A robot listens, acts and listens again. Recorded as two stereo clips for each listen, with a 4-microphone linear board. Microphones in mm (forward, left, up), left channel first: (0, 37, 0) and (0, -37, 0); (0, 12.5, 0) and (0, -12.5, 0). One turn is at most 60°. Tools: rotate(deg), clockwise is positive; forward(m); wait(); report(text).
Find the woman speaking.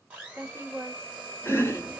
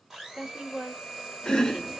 rotate(40)
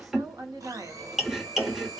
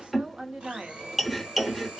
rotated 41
rotate(60)
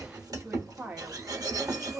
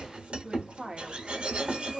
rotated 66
rotate(25)
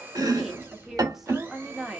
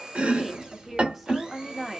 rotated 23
report("Facing the woman speaking, 1 to 2 m away.")